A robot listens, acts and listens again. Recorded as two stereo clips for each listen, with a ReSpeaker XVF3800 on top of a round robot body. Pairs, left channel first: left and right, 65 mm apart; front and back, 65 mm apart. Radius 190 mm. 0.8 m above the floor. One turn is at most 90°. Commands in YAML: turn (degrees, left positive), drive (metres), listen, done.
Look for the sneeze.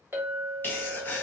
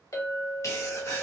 turn: 35
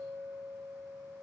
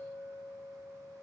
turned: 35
done: "Facing where the sneeze came from. I can't hear it now."